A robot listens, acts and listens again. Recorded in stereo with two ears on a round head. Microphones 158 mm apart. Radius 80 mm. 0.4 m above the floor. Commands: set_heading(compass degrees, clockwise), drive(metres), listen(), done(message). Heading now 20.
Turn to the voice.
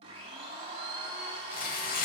listen()
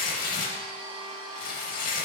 listen()
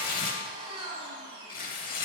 done("I can't make out anyone speaking, only tearing paper and a blender.")